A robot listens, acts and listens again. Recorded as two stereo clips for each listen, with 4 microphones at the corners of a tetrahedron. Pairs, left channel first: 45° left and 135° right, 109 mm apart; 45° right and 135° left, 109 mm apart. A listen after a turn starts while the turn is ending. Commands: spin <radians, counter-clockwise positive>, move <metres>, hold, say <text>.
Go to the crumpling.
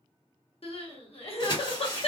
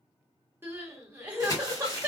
spin 0.17
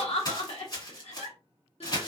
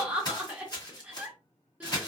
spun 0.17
move 1.0
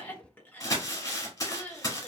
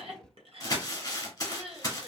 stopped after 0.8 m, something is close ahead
say I am next to the crumpling.